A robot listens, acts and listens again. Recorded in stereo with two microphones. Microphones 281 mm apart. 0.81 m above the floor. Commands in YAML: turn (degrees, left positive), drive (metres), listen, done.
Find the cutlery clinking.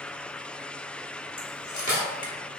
turn: 90
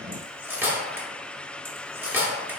done: "Found it: cutlery clinking, straight ahead."